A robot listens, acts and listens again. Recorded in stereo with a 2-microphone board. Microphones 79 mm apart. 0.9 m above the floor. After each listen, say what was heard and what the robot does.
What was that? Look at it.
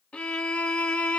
The violin: about 15° left or 165° left. Turn 15° left.
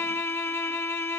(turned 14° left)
So it is at 150° left. Turn 150° left.
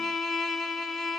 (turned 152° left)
Facing the violin, 1 to 2 m away.